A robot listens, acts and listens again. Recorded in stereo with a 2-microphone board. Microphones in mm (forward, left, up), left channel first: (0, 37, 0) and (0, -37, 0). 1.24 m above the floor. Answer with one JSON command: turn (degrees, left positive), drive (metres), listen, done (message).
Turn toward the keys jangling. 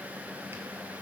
{"listen": true}
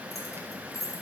{"turn": 45}
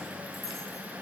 {"listen": true}
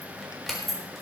{"done": "Facing the keys jangling, 2 to 4 m away."}